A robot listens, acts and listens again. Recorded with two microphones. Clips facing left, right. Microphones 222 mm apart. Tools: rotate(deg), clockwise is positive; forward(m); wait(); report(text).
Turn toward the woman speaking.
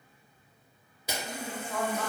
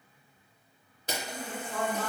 rotate(-55)
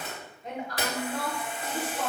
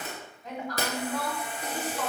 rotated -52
rotate(-35)
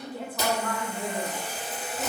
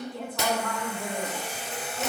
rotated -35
rotate(-15)
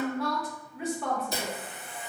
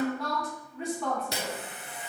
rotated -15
report("Facing the woman speaking.")